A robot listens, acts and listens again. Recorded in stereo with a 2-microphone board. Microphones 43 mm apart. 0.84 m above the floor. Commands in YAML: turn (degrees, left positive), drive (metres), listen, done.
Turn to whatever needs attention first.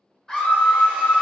turn: 30
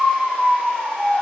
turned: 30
turn: -20
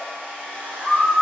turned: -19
done: "Found it: a scream, straight ahead, 1 to 2 m away."